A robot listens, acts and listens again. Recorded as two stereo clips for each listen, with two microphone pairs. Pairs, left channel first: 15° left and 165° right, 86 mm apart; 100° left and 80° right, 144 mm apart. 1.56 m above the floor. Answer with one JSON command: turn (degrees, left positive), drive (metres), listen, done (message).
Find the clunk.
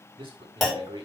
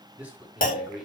{"turn": 105}
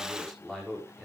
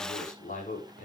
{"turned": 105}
{"done": "I heard a clunk from this way, but can't make it out now."}